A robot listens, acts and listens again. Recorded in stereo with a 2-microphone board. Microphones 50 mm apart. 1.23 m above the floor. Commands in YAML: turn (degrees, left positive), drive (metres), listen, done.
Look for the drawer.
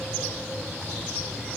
listen: true
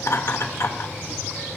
listen: true
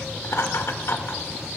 done: "I can't make out a drawer, only laughter."